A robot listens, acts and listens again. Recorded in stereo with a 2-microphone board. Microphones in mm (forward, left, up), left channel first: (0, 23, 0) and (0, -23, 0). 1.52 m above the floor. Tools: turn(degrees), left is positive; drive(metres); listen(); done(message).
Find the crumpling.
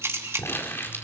turn(degrees=55)
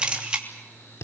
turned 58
turn(degrees=70)
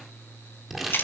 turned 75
done("Found it: crumpling, straight ahead.")